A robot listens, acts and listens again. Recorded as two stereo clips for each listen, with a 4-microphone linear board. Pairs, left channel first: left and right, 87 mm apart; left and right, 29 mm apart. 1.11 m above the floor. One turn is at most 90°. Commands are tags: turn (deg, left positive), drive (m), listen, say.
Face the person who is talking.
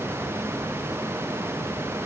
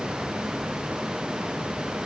<listen/>
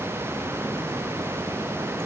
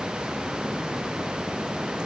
<listen/>
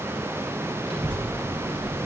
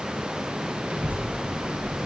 <turn deg="-70"/>
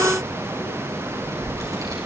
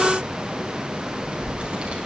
<turn deg="-40"/>
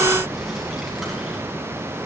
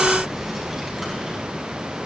<say>Facing the child speaking.</say>